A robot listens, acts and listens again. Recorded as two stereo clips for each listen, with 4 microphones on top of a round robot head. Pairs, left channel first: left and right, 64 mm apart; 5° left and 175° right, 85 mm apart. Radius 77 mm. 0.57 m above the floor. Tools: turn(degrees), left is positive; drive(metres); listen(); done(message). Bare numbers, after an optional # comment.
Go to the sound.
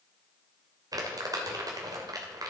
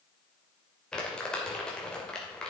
# The crumpling: 80° right.
turn(-80)
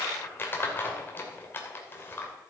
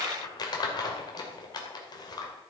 # The crumpling is now 35° left.
turn(35)
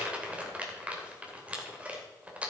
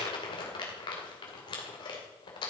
# The crumpling is now 20° right.
turn(-20)
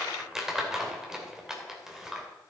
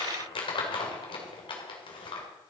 # The crumpling is now 10° right.
turn(-10)
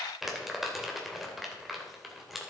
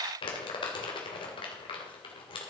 drive(1.0)
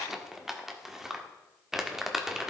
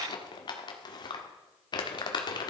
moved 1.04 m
drive(1.0)
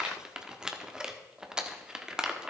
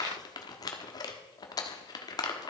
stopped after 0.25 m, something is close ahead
# The crumpling is now 15° right.
turn(-15)
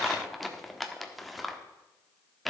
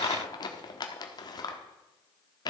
done("Arrived at the crumpling, straight ahead.")